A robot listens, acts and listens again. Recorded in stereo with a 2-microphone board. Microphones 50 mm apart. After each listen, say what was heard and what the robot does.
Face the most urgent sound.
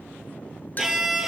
Keep listening.
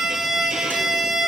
Keep listening.
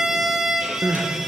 The crying: about 65° right or 115° right. Turn 65° right.
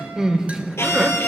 So it is at 15° right. Turn 15° right.
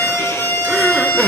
Facing the crying, 1 to 2 m away.